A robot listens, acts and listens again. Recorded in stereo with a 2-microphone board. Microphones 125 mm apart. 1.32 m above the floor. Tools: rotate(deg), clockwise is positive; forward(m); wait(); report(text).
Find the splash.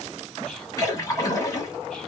rotate(-25)
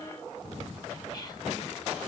wait()
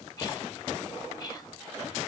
report("I heard a splash, but can't make it out now. It was about straight ahead or 130° left.")